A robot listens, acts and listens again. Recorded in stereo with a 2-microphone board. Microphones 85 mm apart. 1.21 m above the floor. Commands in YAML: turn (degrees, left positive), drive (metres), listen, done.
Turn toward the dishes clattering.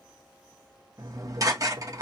turn: -40
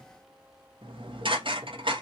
turn: -95
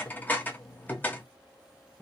turn: 20
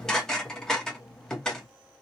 done: "Facing the dishes clattering."